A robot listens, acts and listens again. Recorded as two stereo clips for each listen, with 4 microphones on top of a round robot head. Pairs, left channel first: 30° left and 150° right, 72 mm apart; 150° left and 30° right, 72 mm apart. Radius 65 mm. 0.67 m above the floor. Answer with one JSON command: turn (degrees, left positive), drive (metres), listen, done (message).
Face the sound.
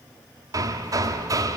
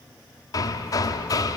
{"turn": 180}
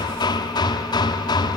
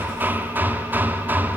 {"turn": 30}
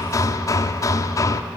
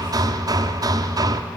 {"done": "Facing the hammering, 1 to 2 m away."}